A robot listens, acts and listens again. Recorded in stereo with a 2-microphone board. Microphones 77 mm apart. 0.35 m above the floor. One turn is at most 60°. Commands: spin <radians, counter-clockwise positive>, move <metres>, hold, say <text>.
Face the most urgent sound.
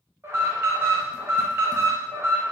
spin -0.61
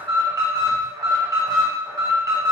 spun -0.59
spin -1.05
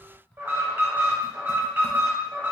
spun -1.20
spin -0.61
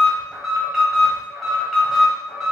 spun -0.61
say Found it: an alarm, straight ahead.